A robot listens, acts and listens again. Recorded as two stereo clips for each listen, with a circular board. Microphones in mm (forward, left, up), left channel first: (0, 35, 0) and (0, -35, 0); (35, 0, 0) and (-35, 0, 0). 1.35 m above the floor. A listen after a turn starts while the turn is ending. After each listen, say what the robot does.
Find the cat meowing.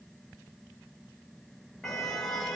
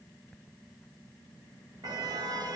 Keep listening.
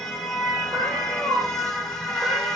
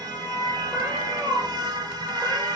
Turn 105° right.
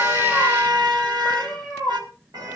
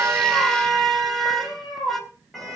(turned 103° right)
Turn 10° left.
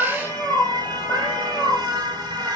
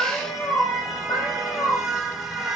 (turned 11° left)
Found it: a cat meowing, straight ahead.